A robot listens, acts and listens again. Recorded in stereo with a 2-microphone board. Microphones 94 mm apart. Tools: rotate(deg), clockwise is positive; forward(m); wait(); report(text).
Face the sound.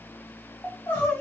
rotate(-20)
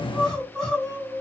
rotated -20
report("Found it: crying, straight ahead.")